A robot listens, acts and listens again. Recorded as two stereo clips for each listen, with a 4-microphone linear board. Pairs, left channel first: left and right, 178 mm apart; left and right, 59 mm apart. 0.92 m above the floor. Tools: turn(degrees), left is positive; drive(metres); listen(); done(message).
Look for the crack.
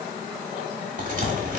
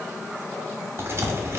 turn(degrees=-45)
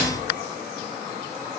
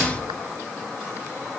listen()
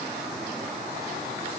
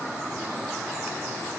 done("I heard a crack, but can't make it out now. It was about straight ahead or 90° right.")